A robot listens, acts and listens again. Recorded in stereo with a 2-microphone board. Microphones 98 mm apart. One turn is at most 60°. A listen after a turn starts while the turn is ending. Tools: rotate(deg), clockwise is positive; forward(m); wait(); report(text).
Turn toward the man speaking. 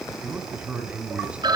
rotate(30)
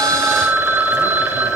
wait()
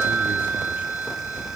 wait()
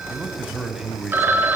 rotate(-30)
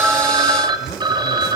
wait()
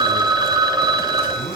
wait()
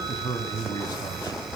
rotate(-60)
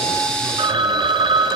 rotate(-60)
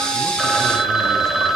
rotate(-20)
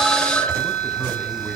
report("I heard a man speaking from this way, but can't make it out now.")